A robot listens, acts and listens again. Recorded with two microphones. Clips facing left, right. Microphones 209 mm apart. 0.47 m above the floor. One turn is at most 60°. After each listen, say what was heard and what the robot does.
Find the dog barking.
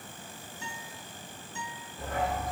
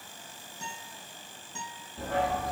Turn 60° right.
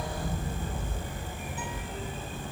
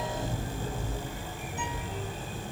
So it is at 35° right. Turn 35° right.
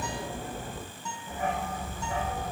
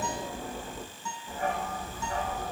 Found it: a dog barking, straight ahead, over 4 m away.